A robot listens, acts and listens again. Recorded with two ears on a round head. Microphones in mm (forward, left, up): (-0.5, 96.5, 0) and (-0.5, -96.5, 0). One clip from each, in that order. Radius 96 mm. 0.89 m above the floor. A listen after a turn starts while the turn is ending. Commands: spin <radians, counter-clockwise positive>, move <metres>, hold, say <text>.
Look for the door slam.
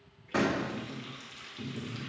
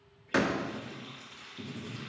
spin -1.05
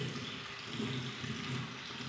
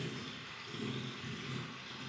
hold
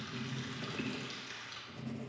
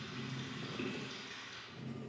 say I heard a door slam, but can't make it out now. It was about straight ahead or 60° right.